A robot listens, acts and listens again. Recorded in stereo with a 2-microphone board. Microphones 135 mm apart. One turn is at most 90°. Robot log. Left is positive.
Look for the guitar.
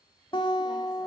note: The guitar: about 45° left or 135° left.
cmd yaw +45
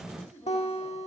note: So it is at 80° left.
cmd yaw +80
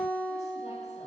note: The guitar is now 15° left.
cmd yaw +15
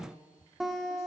end: Found it: a guitar, straight ahead.